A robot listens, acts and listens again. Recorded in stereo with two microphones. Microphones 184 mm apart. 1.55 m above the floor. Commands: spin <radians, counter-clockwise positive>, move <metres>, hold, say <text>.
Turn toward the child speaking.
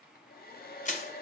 hold
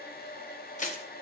hold
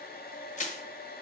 say I can't make out a child speaking, only a hair dryer and crushing.